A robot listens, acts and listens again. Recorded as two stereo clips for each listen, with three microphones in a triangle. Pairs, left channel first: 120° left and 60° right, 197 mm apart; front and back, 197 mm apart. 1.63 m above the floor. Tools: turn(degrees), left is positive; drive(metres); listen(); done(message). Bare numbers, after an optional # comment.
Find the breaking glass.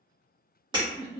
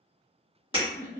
# The breaking glass: 125° right.
turn(-125)
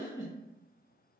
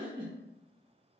done("I heard breaking glass from this way, but can't make it out now.")